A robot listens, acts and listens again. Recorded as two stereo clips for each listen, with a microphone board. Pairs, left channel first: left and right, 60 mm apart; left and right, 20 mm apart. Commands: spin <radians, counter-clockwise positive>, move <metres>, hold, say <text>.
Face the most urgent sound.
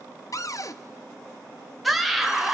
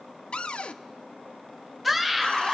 spin 0.52
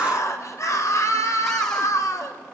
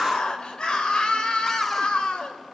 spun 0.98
spin 2.18
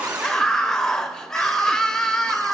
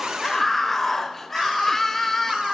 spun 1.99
spin 0.17
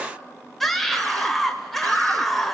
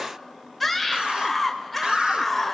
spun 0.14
say Found it: a scream, straight ahead, 2 to 4 m away.